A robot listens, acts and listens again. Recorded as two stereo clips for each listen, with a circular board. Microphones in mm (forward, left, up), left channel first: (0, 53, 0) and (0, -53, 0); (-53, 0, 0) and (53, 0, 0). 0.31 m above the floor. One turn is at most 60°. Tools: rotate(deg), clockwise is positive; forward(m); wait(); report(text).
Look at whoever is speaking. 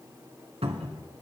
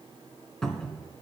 wait()
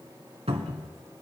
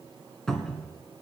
wait()
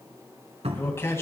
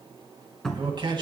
rotate(-30)
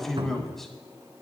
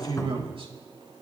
report("Facing the man speaking.")